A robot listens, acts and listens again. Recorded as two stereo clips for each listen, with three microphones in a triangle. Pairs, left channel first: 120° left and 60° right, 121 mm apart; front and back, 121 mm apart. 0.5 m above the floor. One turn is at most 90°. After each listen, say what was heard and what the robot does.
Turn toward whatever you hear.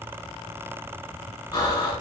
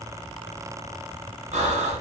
The breathing: 175° left. Turn 90° left.
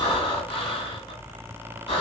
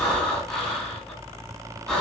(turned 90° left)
The breathing is now 80° left. Turn 80° left.
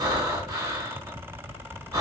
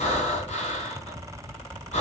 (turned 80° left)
Found it: breathing, straight ahead, 1 to 2 m away.